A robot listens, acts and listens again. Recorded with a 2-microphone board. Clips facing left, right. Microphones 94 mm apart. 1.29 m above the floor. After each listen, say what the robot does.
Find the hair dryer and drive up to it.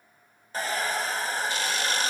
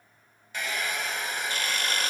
Turn 35° left.
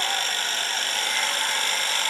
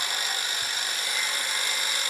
Turn 110° left.
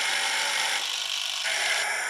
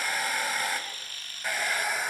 Drive 1.0 m forward.
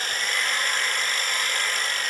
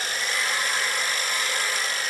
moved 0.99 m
Turn 10° right.
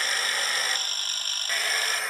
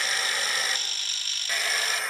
Drive 1.0 m forward.
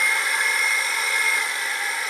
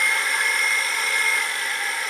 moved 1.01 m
Drive 1.0 m forward.
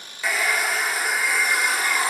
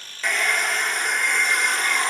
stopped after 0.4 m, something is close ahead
Arrived at the hair dryer, straight ahead.